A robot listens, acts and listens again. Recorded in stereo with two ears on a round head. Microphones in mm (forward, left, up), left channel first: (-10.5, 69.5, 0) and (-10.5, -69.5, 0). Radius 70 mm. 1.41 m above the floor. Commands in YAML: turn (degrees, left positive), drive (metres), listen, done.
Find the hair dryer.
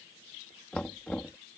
listen: true
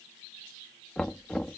listen: true
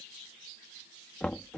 done: "I can't make out a hair dryer, only knocking."